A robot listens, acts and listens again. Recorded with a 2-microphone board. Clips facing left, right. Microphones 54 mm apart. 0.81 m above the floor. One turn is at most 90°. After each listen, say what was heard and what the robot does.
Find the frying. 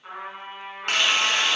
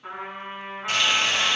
The frying: about 70° left or 110° left. Turn 70° left.
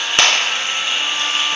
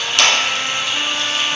So it is at 35° left. Turn 35° left.
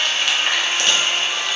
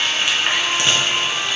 The frying is now 15° right. Turn 15° right.
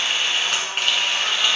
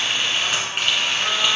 Facing the frying.